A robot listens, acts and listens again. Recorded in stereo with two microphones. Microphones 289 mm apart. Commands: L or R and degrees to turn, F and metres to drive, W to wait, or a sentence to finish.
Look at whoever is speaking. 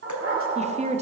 R25
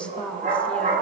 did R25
Facing the woman speaking, under 1 m away.